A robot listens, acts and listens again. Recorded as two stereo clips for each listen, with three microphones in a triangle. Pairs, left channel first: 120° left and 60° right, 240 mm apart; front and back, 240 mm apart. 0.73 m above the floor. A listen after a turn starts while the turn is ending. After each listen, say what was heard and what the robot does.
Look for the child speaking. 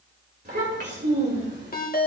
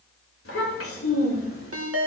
The child speaking: 20° right. Turn 20° right.
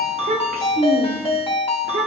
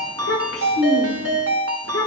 The child speaking is now 20° right. Turn 20° right.
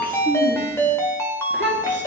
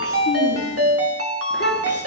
The child speaking is now 30° right. Turn 30° right.
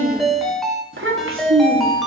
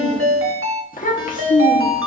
The child speaking is now 50° right. Turn 50° right.
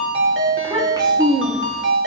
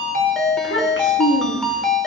The child speaking is now 10° left. Turn 10° left.
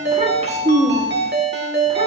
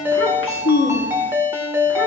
Facing the child speaking, 1 to 2 m away.